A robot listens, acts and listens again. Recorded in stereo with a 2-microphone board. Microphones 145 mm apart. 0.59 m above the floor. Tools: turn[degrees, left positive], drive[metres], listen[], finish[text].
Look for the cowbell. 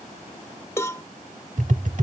Thought: The cowbell: about 20° left or 160° left.
Action: turn[20]
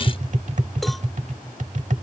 Action: listen[]
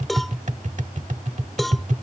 Action: finish[Found it: a cowbell, straight ahead.]